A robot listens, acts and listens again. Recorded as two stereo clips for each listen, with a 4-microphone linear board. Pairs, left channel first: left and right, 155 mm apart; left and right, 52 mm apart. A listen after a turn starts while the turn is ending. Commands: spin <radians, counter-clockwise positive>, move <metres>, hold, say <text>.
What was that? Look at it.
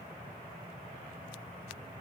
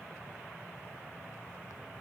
hold
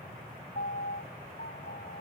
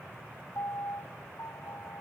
spin 1.57
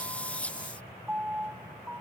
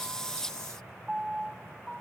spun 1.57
spin -0.17
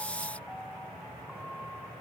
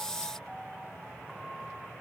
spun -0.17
hold
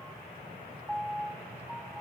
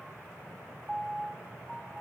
say Found it: a piano, straight ahead.